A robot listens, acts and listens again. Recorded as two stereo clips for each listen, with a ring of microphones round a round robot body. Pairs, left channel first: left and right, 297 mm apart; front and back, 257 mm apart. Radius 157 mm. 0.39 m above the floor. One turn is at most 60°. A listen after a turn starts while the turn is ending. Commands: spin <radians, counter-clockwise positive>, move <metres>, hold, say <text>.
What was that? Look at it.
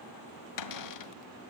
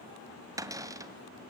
spin 1.05
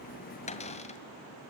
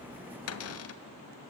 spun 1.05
spin 0.35
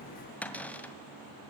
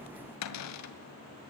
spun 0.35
say Found it: a cupboard door, straight ahead, 2 to 4 m away.